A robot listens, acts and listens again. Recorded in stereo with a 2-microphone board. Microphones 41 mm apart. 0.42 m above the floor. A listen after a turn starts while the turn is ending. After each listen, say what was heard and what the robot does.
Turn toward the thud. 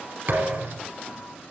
The thud: about 55° right or 125° right. Turn 55° right.
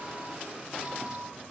Keep listening.
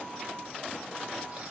I heard a thud, but can't make it out now. It was about straight ahead or 70° right.